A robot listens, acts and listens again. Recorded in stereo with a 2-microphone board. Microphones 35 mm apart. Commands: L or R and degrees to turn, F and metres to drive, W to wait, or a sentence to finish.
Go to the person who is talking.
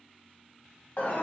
W
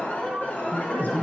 L60
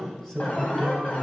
L20
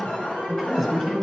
L10
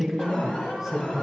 F1.0
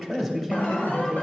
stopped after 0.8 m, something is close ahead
I am next to the man speaking.